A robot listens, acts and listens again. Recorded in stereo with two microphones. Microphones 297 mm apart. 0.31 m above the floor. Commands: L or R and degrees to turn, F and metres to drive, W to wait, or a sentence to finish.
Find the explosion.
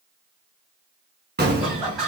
R35
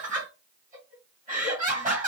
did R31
W
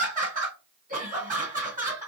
I heard an explosion, but can't make it out now. It was about 5° right or 115° right.